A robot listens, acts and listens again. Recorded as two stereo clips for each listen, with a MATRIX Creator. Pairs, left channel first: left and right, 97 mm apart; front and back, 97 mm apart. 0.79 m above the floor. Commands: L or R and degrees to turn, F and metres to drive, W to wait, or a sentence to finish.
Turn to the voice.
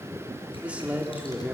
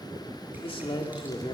R15
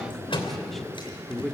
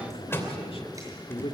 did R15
Found it: a man speaking, straight ahead.